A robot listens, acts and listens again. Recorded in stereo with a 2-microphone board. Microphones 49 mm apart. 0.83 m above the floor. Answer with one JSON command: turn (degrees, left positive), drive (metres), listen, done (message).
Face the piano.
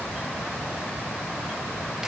{"listen": true}
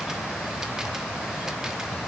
{"listen": true}
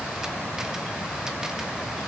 {"done": "I can't make out a piano to turn to."}